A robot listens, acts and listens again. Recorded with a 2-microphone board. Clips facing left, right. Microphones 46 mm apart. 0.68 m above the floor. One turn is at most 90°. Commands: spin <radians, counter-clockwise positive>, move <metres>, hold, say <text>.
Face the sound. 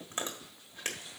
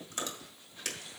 spin 0.52
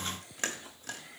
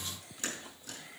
spin 1.57
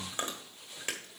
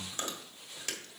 spin 0.52
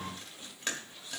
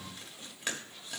say Facing the chewing, 1 to 2 m away.